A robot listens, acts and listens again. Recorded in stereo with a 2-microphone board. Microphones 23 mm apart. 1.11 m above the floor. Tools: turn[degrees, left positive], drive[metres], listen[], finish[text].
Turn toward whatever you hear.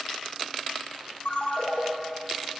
Thought: The ringtone: about 70° left or 110° left.
Action: turn[70]
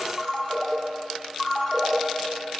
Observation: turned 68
Thought: So it is at 20° left.
Action: turn[20]
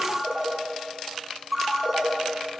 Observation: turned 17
Action: finish[Found it: a ringtone, straight ahead, 1 to 2 m away.]